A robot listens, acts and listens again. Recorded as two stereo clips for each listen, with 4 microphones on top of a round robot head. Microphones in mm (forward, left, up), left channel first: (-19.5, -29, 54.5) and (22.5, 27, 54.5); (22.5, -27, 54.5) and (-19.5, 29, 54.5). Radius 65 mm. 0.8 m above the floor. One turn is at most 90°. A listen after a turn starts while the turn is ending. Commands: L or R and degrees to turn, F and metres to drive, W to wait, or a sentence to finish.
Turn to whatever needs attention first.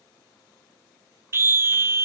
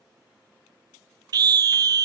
L90
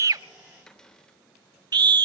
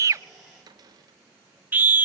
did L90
L65
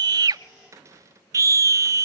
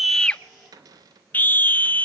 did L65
L10
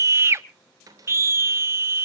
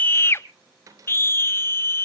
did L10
Found it: a scream, straight ahead, 1 to 2 m away.